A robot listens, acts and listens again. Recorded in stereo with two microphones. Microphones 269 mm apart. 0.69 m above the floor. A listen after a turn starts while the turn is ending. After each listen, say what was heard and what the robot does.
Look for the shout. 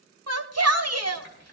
The shout: about 65° right or 115° right. Turn 65° right.
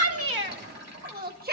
So it is at 40° right. Turn 40° right.
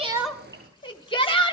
The shout is now 20° left. Turn 20° left.
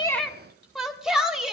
Found it: a shout, straight ahead.